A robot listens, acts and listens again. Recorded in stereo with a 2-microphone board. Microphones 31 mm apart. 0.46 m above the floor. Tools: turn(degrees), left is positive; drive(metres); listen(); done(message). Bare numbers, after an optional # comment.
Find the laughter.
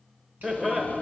# The laughter: about 15° right or 165° right.
turn(-15)
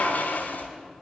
listen()
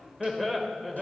done("Found it: laughter, straight ahead, 1 to 2 m away.")